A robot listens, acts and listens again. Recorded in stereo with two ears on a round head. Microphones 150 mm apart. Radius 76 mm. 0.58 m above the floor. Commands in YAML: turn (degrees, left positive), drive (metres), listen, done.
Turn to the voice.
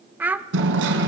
turn: -30
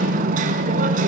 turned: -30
listen: true
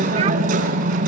listen: true
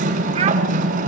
done: "I heard a child speaking, but can't make it out now. It was about 20° left or 140° right."